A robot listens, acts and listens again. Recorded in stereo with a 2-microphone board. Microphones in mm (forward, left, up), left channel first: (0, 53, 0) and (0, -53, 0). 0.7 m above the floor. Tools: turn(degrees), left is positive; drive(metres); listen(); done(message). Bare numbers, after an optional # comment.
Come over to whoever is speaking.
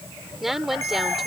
turn(30)
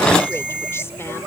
listen()
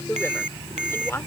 # So it is at 155° left.
turn(155)
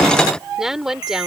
drive(1.0)
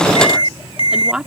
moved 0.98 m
# The woman speaking is now 10° right.
turn(-10)
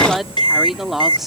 drive(1.0)
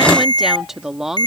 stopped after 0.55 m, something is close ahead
done("Arrived at the woman speaking, straight ahead.")